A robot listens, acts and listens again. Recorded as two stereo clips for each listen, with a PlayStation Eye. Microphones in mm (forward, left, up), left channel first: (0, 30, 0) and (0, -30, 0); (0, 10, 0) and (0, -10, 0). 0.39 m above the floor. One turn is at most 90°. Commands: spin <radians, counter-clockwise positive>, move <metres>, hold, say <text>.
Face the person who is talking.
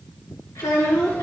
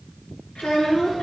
spin 1.57
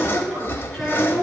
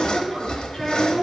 say Found it: a child speaking, straight ahead.